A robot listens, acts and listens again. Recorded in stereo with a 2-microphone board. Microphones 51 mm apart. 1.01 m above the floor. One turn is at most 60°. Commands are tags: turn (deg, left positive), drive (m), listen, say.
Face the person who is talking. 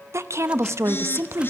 <turn deg="-60"/>
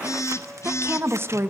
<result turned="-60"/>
<turn deg="-55"/>
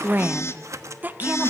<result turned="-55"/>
<turn deg="-40"/>
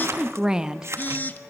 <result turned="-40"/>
<turn deg="-15"/>
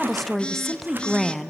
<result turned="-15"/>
<say>Found it: a woman speaking, straight ahead, 1 to 2 m away.</say>